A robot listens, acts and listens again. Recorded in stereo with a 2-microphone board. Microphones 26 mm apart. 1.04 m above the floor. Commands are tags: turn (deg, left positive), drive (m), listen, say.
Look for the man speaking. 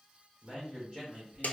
<turn deg="-30"/>
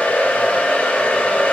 <listen/>
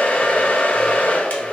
<listen/>
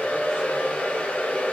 <say>I heard a man speaking, but can't make it out now. It was about straight ahead or 120° right.</say>